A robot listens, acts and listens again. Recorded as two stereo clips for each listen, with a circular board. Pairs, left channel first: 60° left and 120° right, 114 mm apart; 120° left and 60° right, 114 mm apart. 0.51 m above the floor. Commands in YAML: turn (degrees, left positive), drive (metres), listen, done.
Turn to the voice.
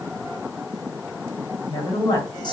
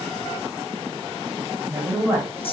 turn: 10
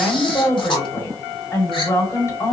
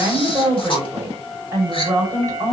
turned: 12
done: "Facing the woman speaking, 2 to 4 m away."